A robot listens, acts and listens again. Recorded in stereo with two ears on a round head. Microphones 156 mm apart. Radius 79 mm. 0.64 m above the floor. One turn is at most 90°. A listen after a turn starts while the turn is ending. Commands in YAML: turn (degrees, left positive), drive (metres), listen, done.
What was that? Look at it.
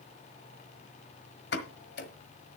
turn: 65
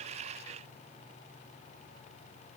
listen: true
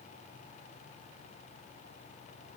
done: "I heard a pop, but can't make it out now. It was about straight ahead or 50° left."